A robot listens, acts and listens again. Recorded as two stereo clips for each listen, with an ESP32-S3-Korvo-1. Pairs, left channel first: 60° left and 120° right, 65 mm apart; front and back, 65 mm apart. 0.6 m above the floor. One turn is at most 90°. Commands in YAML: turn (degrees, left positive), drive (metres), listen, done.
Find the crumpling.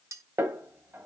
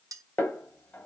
listen: true
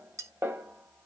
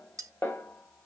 listen: true
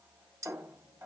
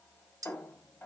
done: "I can't make out crumpling, only a snare drum and cutlery clinking."